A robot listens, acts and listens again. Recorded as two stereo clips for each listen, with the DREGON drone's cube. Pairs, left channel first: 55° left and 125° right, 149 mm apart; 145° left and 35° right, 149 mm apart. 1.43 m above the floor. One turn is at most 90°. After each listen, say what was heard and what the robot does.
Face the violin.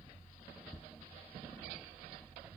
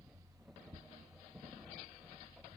Keep listening.
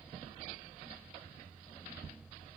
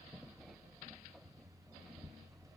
Keep listening.
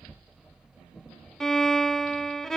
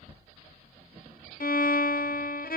The violin: 145° left. Turn 90° left.
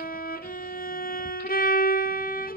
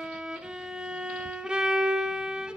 The violin is now 50° left. Turn 50° left.
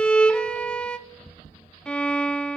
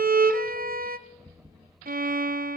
The violin is now 25° right. Turn 25° right.
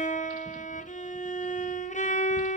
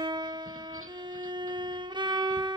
The violin is now 25° left. Turn 25° left.
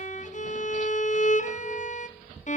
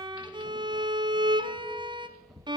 The violin is now 25° left. Turn 25° left.
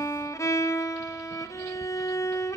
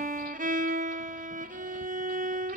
The violin is now 15° right. Turn 15° right.
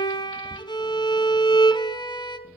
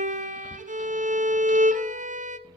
Found it: a violin, straight ahead.